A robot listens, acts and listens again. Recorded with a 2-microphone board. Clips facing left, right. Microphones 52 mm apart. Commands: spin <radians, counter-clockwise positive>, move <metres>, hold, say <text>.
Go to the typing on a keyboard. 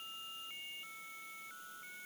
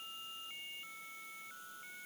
hold
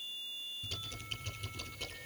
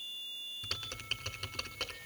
spin -1.31
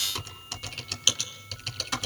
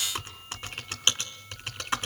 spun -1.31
spin -0.52
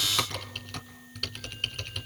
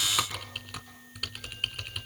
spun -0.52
spin -0.17
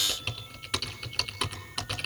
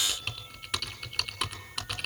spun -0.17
move 1.0
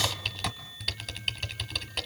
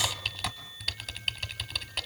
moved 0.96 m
move 1.0
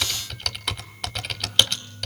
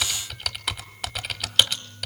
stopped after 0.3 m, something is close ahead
say I am next to the typing on a keyboard.